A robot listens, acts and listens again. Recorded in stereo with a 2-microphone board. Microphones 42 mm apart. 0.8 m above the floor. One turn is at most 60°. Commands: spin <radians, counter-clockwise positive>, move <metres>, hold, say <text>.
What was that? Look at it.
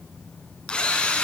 spin 0.44
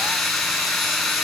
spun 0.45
say Facing the drill.